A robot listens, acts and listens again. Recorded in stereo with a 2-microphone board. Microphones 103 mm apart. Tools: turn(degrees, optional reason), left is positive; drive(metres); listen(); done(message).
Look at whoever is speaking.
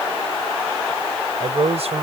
turn(degrees=-75, reason="The man speaking: about 75° right or 105° right.")
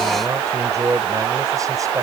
turn(degrees=-35, reason="So it is at 35° right.")
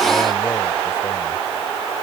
listen()
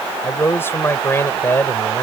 turn(degrees=20, reason="The man speaking is now 20° left.")
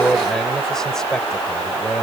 done("Facing the man speaking.")